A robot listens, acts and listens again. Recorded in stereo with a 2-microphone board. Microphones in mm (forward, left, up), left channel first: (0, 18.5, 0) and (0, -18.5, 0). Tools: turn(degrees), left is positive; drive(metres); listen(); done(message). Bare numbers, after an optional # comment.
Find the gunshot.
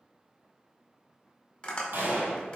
turn(-90)
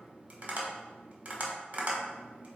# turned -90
done("Facing where the gunshot came from. I can't hear it now.")